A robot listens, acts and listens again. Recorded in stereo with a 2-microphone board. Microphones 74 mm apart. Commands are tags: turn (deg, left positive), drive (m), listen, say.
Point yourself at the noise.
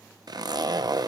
<turn deg="-60"/>
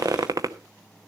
<turn deg="-55"/>
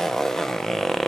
<say>Found it: a zipper, straight ahead, under 1 m away.</say>